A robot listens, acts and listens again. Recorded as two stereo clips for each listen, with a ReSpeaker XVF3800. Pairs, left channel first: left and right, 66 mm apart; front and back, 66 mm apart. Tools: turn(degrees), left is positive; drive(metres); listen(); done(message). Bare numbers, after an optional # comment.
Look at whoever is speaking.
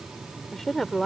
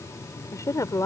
done("Found it: a woman speaking, straight ahead.")